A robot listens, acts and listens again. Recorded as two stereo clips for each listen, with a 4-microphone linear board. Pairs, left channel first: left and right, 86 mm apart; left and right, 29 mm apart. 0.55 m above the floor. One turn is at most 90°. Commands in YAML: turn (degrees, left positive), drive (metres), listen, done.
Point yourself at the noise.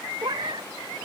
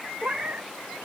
turn: -60
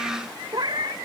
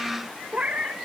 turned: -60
turn: -55
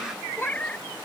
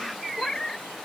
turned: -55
turn: 15
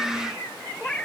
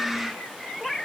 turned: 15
turn: 10
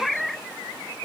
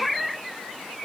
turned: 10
done: "Found it: a cat meowing, straight ahead."